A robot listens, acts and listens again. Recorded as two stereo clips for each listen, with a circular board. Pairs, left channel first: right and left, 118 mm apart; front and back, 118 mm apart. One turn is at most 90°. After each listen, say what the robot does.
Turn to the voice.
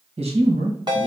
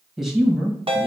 Turn 90° left.
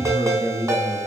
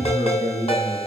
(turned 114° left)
Turn 25° right.
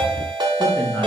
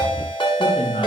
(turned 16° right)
Facing the man speaking, 1 to 2 m away.